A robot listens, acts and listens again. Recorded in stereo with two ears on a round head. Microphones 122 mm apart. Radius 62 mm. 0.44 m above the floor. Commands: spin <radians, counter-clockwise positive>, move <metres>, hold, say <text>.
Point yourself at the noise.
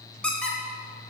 spin 0.52
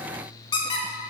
spin 2.44
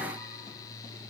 hold
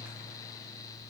hold
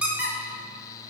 spin -0.17
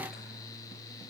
hold
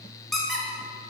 say Facing the squeak.